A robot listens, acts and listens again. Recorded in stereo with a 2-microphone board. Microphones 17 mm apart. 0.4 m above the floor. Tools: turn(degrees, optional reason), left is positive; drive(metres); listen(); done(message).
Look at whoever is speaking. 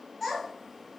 turn(degrees=30)
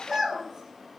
turn(degrees=-30, reason="So it is at 30° right.")
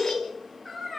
turn(degrees=10, reason="The child speaking is now 10° left.")
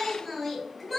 done("Found it: a child speaking, straight ahead, 1 to 2 m away.")